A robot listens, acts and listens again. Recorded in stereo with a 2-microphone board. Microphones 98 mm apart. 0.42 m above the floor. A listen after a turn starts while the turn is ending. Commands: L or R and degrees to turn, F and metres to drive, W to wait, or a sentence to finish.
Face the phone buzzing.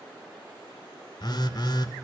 L50
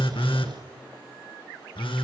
L75
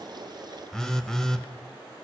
Facing the phone buzzing, under 1 m away.